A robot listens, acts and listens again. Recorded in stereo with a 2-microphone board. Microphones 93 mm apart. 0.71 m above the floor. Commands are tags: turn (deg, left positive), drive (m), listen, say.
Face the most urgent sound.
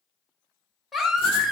<turn deg="30"/>
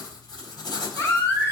<turn deg="145"/>
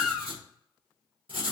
<say>Found it: a baby crying, straight ahead, under 1 m away.</say>